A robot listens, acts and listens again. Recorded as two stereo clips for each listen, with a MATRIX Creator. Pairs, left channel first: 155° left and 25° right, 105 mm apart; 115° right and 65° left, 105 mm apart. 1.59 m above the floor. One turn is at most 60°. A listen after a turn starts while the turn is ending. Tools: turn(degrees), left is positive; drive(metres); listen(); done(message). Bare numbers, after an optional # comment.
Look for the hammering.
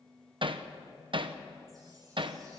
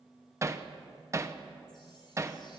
# The hammering: 10° left.
turn(10)
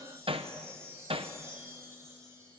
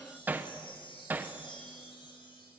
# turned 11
done("Facing the hammering.")